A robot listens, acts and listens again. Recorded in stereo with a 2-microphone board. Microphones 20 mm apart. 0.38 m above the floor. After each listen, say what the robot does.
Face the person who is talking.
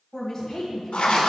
Turn 25° left.
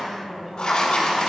Turn 20° right.
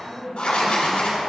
Turn 10° right.
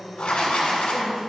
Turn 10° right.
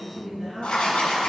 Found it: a woman speaking, straight ahead.